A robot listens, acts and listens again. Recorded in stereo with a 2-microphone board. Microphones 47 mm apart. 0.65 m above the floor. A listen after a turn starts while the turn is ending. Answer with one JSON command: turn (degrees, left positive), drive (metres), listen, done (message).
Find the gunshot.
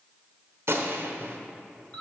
{"turn": -65}
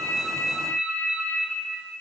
{"listen": true}
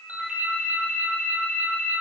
{"done": "I heard a gunshot, but can't make it out now. It was about straight ahead or 50° right."}